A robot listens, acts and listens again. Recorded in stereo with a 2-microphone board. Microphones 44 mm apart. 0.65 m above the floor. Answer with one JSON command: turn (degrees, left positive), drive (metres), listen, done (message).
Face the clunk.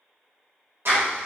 {"listen": true}
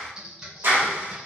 {"listen": true}
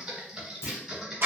{"turn": 90}
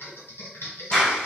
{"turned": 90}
{"done": "I heard a clunk from this way, but can't make it out now."}